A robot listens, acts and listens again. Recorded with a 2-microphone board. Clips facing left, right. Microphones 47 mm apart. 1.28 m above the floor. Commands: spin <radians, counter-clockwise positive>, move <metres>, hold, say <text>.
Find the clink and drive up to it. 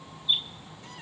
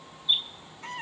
hold
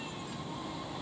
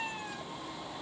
hold
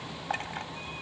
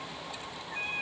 spin 0.87
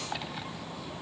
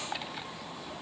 hold
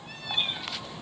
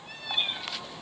hold
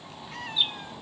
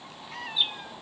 say I heard a clink, but can't make it out now. It was about straight ahead or 80° left. I did not reach it.